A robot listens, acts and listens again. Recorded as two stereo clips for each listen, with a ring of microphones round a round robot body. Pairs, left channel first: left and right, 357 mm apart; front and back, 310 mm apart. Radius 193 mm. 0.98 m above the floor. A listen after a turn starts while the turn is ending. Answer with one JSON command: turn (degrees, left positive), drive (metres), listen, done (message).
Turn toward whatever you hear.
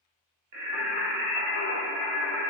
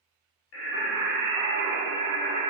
{"turn": -70}
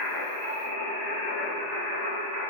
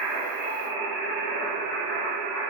{"turn": -40}
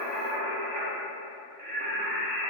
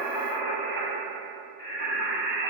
{"turn": -25}
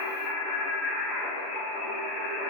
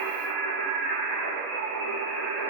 {"done": "Found it: singing, straight ahead, 2 to 4 m away."}